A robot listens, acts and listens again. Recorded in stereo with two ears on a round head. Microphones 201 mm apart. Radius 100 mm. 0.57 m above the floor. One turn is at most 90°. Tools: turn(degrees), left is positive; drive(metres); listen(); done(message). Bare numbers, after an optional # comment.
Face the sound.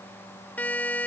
turn(30)
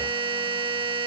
# So it is at 25° right.
turn(-25)
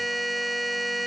done("Found it: a buzzer, straight ahead.")